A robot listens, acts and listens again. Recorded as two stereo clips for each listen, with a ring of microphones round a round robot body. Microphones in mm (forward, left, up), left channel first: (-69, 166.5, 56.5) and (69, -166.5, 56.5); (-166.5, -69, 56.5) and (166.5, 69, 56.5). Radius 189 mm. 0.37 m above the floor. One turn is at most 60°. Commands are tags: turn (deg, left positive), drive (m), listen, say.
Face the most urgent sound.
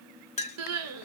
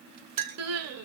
<turn deg="-20"/>
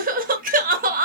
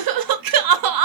<say>Facing the crying.</say>